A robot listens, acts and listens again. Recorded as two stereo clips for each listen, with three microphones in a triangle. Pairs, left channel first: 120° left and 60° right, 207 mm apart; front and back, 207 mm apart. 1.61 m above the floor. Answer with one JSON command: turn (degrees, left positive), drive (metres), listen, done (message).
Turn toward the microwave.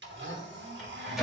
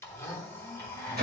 {"turn": -150}
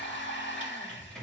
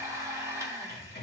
{"turn": 30}
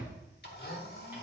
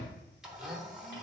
{"listen": true}
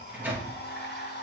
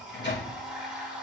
{"turn": 20}
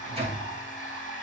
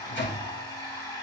{"done": "Found it: a microwave, straight ahead, 2 to 4 m away."}